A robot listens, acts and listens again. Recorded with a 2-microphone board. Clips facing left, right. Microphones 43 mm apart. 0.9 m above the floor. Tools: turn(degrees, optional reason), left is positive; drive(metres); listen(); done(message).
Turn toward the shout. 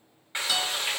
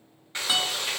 listen()
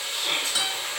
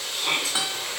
turn(degrees=-70, reason="The shout: about 70° right or 110° right.")
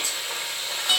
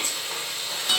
listen()
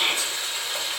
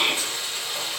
turn(degrees=-35, reason="So it is at 35° right.")
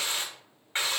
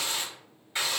listen()
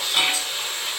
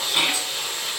listen()
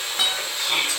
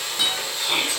done("Facing the shout.")